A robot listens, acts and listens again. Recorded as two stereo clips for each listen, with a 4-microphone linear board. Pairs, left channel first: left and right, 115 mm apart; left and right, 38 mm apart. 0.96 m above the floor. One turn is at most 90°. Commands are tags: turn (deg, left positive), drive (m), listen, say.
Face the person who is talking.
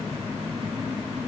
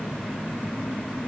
<listen/>
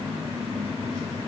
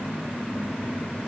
<listen/>
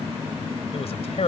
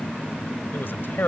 <turn deg="65"/>
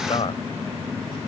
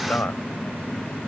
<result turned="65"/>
<turn deg="55"/>
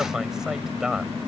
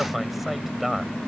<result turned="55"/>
<say>Facing the man speaking.</say>